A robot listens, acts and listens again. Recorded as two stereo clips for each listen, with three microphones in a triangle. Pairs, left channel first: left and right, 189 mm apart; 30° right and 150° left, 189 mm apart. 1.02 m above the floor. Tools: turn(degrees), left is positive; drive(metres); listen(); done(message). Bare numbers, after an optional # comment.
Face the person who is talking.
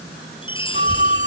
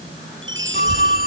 # The child speaking: 155° right.
turn(-155)
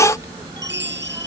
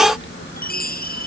# The child speaking is now 20° right.
turn(-20)
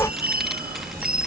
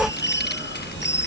done("Facing the child speaking.")